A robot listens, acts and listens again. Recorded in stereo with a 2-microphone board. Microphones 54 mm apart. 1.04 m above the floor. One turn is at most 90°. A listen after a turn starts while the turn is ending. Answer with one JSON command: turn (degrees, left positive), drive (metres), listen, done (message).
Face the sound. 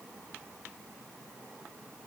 {"listen": true}
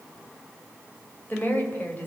{"turn": 35}
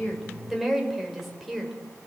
{"done": "Found it: a woman speaking, straight ahead, over 4 m away."}